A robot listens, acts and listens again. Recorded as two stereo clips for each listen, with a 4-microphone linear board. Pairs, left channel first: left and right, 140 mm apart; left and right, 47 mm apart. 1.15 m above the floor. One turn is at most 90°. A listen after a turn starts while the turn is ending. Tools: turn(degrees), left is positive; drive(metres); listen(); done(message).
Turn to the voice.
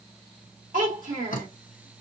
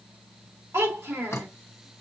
turn(degrees=-90)
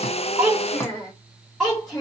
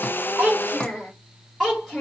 done("Facing the child speaking, 2 to 4 m away.")